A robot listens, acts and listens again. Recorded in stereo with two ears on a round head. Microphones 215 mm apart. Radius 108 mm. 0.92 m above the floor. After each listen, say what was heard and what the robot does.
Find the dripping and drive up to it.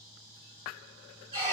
Keep listening.
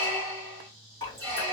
The dripping: about 20° left or 160° left. Turn 20° left.
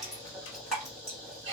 Drive 1.0 m forward.
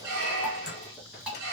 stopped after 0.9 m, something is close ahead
Arrived at the dripping, straight ahead.